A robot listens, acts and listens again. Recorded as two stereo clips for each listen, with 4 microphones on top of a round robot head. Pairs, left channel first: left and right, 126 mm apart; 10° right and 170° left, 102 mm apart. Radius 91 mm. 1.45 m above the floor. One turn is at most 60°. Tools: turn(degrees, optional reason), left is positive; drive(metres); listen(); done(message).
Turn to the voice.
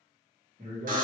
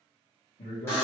turn(degrees=-35, reason="The man speaking: 35° right.")
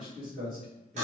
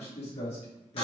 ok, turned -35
done("Found it: a man speaking, straight ahead, 1 to 2 m away.")